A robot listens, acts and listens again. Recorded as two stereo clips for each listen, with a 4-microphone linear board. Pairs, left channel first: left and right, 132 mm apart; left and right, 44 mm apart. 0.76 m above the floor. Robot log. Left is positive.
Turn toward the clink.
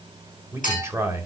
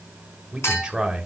cmd yaw +90
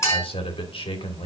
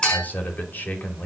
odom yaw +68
note: So it is at 25° left.
cmd yaw +25
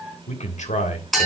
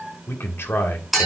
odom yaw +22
end: Found it: a clink, straight ahead, over 4 m away.